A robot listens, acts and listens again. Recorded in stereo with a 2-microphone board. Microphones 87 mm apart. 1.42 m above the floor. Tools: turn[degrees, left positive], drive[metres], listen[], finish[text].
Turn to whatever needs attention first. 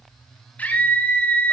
Thought: The scream: about 20° left or 160° left.
Action: turn[20]
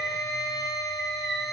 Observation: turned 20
Action: finish[Found it: a scream, straight ahead, over 4 m away.]